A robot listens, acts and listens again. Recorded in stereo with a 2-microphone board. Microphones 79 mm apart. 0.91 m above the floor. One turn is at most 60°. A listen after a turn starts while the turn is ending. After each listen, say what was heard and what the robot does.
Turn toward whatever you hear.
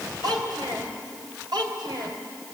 Turn 60° right.
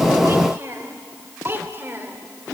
So it is at 30° right. Turn 30° right.
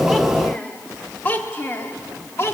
The child speaking is now 35° left. Turn 35° left.
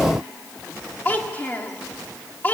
The child speaking is now 25° left. Turn 25° left.
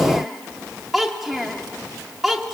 Facing the child speaking.